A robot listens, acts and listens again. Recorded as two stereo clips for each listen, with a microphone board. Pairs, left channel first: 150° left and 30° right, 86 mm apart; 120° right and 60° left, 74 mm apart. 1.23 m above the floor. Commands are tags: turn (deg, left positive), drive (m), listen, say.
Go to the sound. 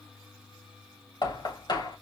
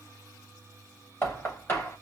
<turn deg="175"/>
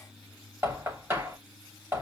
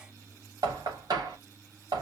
<turn deg="30"/>
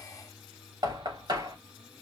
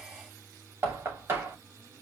<drive m="1.0"/>
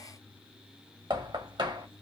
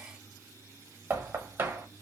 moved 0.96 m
<drive m="1.0"/>
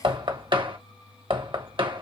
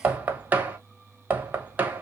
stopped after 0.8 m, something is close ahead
<turn deg="-10"/>
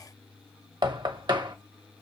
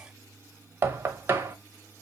<say>Arrived at the knocking, straight ahead.</say>